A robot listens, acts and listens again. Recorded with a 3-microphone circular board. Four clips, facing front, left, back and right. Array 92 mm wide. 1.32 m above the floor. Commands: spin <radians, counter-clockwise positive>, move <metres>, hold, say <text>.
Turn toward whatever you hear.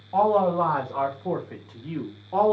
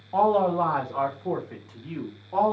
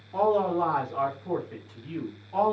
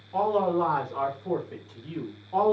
spin 0.26
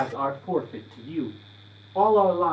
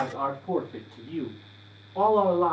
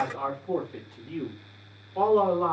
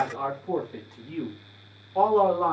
spin -0.35
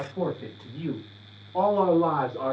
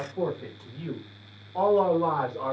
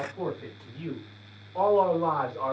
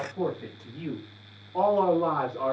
spin -0.35
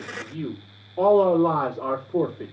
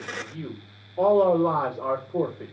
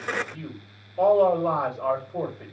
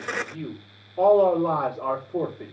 say Found it: a man speaking, straight ahead.